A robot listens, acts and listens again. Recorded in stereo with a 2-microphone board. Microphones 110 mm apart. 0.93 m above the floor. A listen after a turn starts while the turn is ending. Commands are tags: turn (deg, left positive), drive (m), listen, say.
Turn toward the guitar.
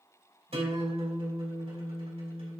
<turn deg="-90"/>
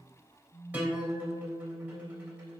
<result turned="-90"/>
<turn deg="-15"/>
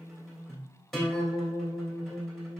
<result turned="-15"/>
<say>Facing the guitar.</say>